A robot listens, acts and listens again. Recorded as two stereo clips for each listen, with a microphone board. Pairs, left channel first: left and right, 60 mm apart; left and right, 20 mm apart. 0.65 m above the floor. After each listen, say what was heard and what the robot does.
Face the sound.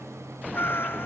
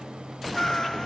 The cat meowing: about 40° left or 140° left. Turn 40° left.
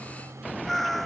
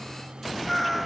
Facing the cat meowing.